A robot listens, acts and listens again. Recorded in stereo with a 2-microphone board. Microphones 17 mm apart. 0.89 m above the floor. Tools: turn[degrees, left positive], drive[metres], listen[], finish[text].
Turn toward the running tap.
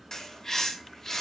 Action: listen[]
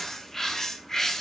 Action: listen[]
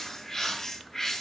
Action: finish[I can't make out a running tap, only a bird.]